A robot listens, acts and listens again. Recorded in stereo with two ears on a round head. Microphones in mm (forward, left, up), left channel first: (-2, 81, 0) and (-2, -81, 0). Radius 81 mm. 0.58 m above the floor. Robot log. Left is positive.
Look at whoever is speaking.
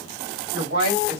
note: The woman speaking: about 75° right or 105° right.
cmd yaw -75
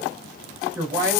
note: So it is at 20° right.
cmd yaw -20
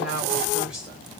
end: Facing the woman speaking.